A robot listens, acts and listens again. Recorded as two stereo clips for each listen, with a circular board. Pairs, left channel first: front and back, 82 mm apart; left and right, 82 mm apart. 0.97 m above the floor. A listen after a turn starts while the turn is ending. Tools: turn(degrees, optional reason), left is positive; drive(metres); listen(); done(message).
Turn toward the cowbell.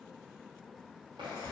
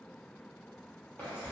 listen()
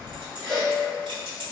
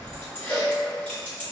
turn(degrees=85, reason="The cowbell: 85° left.")
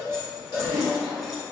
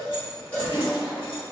turn(degrees=20, reason="The cowbell is now 20° left.")
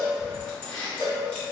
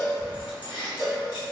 done("Facing the cowbell, 1 to 2 m away.")